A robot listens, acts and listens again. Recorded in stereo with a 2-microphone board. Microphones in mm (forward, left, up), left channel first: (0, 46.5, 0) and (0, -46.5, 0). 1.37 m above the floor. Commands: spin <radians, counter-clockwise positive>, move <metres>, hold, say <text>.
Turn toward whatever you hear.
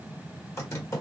spin 0.52
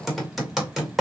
say Facing the typing on a keyboard.